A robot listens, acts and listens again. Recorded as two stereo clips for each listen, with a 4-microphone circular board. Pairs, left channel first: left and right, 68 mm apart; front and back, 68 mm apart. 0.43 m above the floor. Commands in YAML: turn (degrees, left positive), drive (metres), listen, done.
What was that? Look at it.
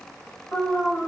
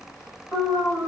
turn: 40
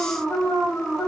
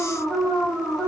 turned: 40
done: "Facing the alarm, 1 to 2 m away."